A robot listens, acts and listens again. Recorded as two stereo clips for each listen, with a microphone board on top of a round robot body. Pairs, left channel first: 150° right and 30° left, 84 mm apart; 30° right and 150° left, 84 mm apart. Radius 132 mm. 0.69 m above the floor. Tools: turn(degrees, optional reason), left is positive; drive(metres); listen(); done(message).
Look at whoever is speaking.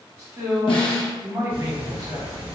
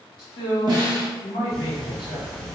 turn(degrees=-15, reason="The man speaking: 15° right.")
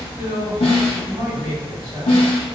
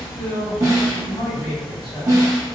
done("Found it: a man speaking, straight ahead, 2 to 4 m away.")